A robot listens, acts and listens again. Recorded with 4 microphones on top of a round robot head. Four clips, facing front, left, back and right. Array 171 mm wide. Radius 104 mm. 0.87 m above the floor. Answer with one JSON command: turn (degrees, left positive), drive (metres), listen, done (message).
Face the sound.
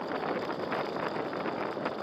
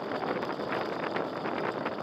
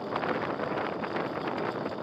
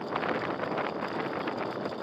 {"listen": true}
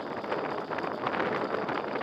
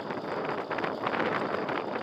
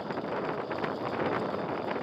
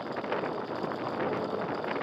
{"listen": true}
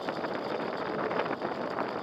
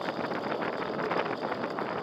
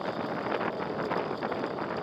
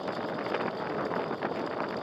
{"done": "I can't make out anything."}